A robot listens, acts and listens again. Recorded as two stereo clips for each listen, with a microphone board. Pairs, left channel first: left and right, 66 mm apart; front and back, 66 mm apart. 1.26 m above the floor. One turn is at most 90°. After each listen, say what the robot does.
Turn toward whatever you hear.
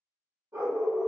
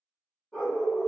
Turn 80° right.
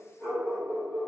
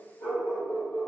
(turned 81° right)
Found it: a dog barking, straight ahead, 1 to 2 m away.